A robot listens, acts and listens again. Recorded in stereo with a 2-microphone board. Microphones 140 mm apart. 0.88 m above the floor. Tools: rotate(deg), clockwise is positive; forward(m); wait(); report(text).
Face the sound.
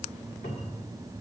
rotate(-90)
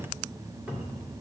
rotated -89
report("Facing the cupboard door, 1 to 2 m away.")